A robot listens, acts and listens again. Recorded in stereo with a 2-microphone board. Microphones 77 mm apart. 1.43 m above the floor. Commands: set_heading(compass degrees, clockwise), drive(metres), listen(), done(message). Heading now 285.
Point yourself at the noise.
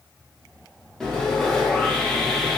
set_heading(255)
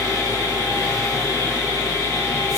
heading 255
set_heading(110)
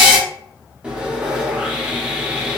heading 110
set_heading(125)
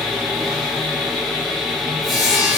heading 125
done("Facing the sawing, under 1 m away.")